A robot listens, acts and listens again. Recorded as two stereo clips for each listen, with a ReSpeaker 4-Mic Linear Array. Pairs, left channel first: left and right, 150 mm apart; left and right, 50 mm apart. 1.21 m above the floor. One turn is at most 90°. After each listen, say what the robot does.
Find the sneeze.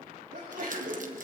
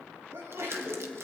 Turn 70° right.
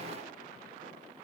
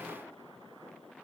Keep listening.
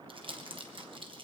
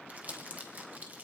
I heard a sneeze, but can't make it out now. It was about straight ahead or 40° right.